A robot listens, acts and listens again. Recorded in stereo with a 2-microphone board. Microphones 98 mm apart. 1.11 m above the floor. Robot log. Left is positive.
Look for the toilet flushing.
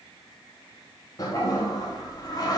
note: The toilet flushing: about 35° left or 145° left.
cmd yaw +35
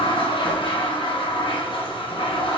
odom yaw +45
note: So it is at 90° left.
cmd yaw +90
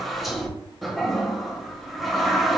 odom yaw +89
end: Facing the toilet flushing.